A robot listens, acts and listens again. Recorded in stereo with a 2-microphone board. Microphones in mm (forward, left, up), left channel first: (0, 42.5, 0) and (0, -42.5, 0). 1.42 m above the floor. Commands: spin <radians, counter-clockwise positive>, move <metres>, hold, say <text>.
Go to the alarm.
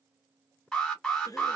spin 0.52
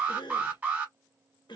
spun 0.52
spin -0.44
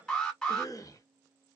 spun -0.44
move 1.0
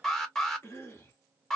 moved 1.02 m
move 1.0
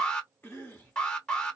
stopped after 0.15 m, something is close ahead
spin 0.26
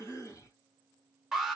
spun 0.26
say I am next to the alarm.